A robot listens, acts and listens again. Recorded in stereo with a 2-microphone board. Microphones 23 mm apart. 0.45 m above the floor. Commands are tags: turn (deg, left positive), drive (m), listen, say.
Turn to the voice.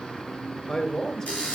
<turn deg="30"/>
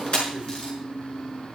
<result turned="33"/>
<listen/>
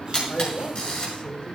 <turn deg="110"/>
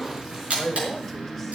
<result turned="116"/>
<say>Facing the man speaking.</say>